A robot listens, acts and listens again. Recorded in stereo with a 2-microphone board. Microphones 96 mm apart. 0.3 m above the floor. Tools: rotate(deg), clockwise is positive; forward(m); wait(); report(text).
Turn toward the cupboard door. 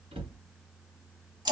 rotate(90)
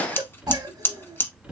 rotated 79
rotate(10)
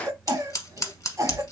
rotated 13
report("Found it: a cupboard door, straight ahead, 1 to 2 m away.")